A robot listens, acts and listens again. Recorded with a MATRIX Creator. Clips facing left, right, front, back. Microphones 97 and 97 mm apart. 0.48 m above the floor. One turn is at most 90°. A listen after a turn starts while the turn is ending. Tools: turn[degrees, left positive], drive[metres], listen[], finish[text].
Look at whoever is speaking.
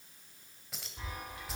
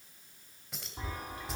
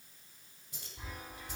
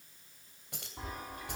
Action: listen[]
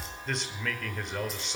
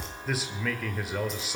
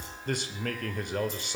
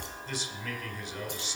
Action: finish[Found it: a man speaking, straight ahead, 1 to 2 m away.]